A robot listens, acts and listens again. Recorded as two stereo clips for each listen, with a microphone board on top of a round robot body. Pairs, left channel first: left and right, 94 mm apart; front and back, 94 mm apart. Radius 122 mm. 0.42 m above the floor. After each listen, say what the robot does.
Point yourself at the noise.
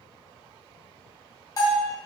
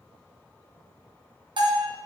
Turn 145° left.
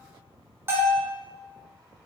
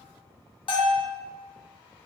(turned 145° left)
Turn 25° right.
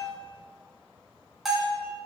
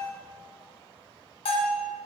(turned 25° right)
Found it: a bell, straight ahead, 1 to 2 m away.